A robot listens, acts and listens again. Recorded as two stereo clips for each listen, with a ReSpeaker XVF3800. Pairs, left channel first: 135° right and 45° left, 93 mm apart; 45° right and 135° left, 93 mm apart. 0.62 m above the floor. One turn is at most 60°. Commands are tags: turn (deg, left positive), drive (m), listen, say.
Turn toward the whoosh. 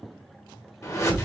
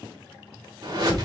<turn deg="60"/>
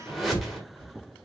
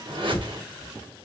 <turn deg="60"/>
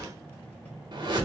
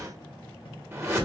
<turn deg="60"/>
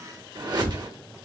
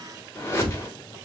<turn deg="10"/>
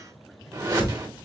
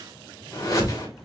<say>Facing the whoosh, 1 to 2 m away.</say>